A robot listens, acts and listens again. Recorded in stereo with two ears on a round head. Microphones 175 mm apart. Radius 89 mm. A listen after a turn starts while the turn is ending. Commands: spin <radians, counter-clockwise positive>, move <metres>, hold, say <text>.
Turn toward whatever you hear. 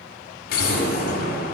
spin 0.87
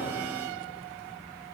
hold
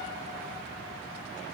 say I heard an explosion, but can't make it out now. It was about straight ahead or 80° left.